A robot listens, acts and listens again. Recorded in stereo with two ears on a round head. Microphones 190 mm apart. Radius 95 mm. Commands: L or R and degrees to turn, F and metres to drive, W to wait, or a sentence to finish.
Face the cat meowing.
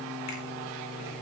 W
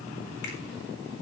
W
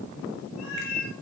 L75
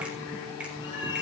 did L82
L25
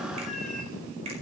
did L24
Facing the cat meowing, over 4 m away.